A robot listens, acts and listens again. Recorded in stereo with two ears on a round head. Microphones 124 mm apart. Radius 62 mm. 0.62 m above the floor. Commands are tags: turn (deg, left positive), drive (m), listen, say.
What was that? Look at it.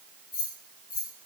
<turn deg="65"/>
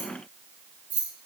<turn deg="-10"/>
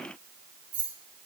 <turn deg="-10"/>
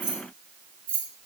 <turn deg="-15"/>
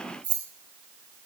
<turn deg="-10"/>
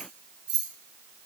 <say>Facing the keys jangling.</say>